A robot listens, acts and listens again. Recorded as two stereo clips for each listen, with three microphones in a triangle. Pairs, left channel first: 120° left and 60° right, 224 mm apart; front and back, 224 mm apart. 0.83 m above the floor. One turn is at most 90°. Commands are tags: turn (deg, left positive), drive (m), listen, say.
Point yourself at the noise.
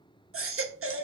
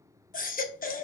<turn deg="-50"/>
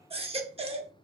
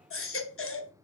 <say>Facing the baby crying, under 1 m away.</say>